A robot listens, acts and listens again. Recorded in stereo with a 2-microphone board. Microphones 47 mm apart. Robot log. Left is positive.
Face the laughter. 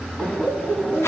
cmd yaw +30
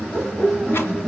note: So it is at 20° right.
cmd yaw -20
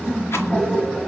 end: Facing the laughter, 2 to 4 m away.